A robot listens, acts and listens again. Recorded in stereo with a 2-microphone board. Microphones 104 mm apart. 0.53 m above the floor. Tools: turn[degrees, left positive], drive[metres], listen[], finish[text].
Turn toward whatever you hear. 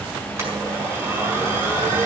Thought: The blender: about 25° right or 155° right.
Action: turn[-25]
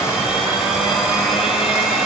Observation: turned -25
Action: finish[Found it: a blender, straight ahead.]